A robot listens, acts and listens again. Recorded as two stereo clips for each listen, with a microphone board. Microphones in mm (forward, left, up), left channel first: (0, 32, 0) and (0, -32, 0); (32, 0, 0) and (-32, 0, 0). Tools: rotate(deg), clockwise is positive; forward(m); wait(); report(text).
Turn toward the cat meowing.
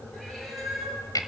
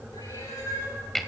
report("Found it: a cat meowing, straight ahead.")